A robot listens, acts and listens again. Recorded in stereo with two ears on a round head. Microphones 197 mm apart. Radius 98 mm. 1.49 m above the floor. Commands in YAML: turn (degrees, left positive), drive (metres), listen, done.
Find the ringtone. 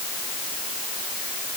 listen: true
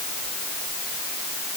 listen: true
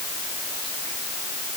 done: "I can't make out a ringtone to turn to."